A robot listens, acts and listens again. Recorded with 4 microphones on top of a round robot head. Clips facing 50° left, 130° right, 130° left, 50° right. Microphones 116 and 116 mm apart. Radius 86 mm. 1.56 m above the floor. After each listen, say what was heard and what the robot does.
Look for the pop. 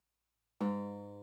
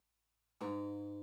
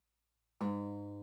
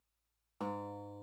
Keep listening.
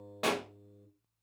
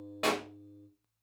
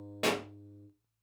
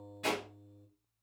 The pop: 135° left. Turn 135° left.
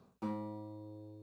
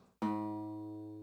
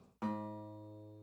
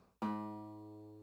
I heard a pop from this way, but can't make it out now.